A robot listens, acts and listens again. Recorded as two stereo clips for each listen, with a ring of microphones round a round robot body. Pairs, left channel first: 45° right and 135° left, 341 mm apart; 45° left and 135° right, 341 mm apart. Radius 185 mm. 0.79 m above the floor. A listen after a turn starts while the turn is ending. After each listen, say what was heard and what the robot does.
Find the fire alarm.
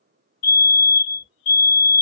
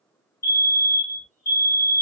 The fire alarm: 15° right. Turn 15° right.
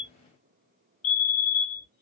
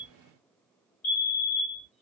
Found it: a fire alarm, straight ahead.